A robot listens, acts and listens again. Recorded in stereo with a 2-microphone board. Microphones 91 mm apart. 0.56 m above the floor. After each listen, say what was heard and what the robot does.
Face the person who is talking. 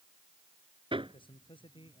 The man speaking: about 70° left or 110° left. Turn 70° left.
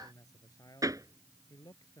So it is at 45° left. Turn 45° left.
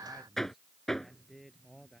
Found it: a man speaking, straight ahead.